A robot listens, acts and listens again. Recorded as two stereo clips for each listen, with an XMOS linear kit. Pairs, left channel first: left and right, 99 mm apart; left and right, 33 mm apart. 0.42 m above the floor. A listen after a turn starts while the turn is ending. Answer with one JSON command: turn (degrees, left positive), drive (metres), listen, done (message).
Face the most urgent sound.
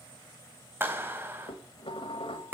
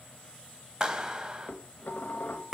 {"listen": true}
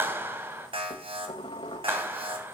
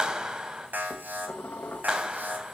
{"turn": -65}
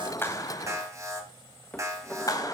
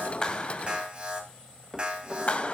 {"turn": -35}
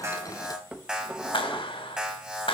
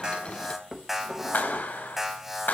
{"turn": -10}
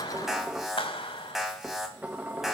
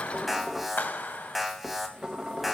{"done": "Facing the alarm."}